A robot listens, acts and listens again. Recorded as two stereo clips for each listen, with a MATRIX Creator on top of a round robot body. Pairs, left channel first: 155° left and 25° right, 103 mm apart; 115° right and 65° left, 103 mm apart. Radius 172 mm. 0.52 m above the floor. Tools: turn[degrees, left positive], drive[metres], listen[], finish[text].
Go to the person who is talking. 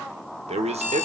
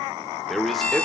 Thought: The man speaking: 25° right.
Action: turn[-25]
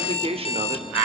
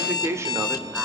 Action: drive[1.0]
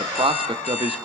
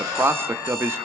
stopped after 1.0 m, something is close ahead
Action: finish[Arrived at the man speaking, straight ahead.]